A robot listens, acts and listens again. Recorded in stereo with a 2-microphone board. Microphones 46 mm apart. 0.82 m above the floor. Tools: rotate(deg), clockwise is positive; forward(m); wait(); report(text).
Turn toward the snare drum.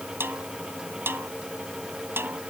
rotate(60)
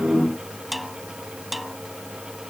report("Facing the snare drum.")